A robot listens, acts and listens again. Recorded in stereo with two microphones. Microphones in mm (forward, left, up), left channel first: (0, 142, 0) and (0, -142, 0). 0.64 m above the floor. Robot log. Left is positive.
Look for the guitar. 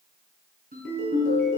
cmd idle
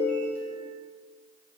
cmd idle
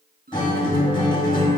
note: The guitar: about 15° left or 165° left.
cmd yaw +15
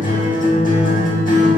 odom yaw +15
note: So it is at 150° left.
cmd yaw +150
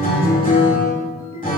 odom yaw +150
note: The guitar is now 35° left.
cmd yaw +35
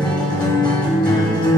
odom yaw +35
note: The guitar is now 15° left.
cmd yaw +15
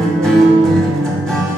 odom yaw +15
end: Facing the guitar, 1 to 2 m away.